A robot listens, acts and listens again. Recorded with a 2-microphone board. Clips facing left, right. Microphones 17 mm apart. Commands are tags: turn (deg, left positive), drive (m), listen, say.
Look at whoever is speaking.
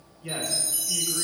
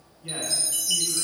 <turn deg="40"/>
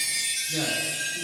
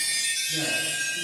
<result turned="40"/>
<listen/>
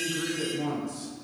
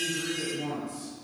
<turn deg="40"/>
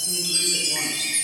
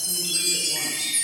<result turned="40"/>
<listen/>
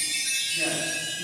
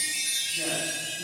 <listen/>
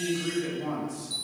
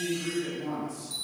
<turn deg="20"/>
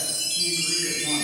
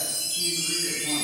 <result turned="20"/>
<listen/>
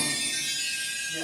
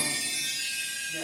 <listen/>
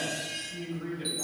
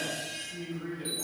<say>Facing the man speaking.</say>